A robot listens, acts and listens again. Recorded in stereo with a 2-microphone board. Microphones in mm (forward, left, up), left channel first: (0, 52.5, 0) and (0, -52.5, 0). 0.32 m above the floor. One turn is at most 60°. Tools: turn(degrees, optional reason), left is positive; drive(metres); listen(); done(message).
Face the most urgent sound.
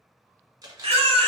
turn(degrees=-60, reason="The baby crying: about 70° right or 110° right.")
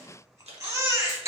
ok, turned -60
turn(degrees=-30, reason="So it is at 30° right.")
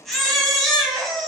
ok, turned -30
done("Found it: a baby crying, straight ahead, under 1 m away.")